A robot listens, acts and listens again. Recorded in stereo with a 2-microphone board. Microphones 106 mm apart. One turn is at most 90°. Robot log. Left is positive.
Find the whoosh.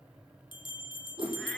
note: The whoosh: about 55° right or 125° right.
cmd yaw -55
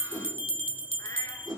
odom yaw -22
note: So it is at 35° right.
cmd yaw -35
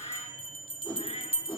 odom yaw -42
note: The whoosh is now 10° left.
cmd yaw +10
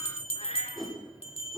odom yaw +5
end: Facing the whoosh, over 4 m away.